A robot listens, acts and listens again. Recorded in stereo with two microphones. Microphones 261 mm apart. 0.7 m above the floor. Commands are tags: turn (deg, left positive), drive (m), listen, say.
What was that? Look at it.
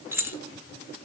<turn deg="-30"/>
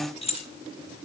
<turn deg="25"/>
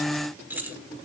<say>Facing the keys jangling.</say>